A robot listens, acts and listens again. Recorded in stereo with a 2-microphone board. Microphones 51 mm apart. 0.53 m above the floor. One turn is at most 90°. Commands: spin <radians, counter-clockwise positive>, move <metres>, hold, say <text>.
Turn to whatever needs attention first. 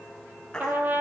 spin 0.26
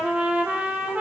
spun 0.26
hold
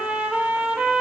hold
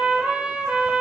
say I heard a baby crying, but can't make it out now. It was about straight ahead or 150° left.